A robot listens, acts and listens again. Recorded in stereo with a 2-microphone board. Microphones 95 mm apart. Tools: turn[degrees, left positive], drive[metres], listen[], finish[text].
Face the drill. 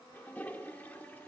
Action: listen[]
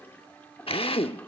Thought: The drill: about 70° left or 110° left.
Action: turn[70]
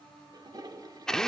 Action: finish[Facing the drill, under 1 m away.]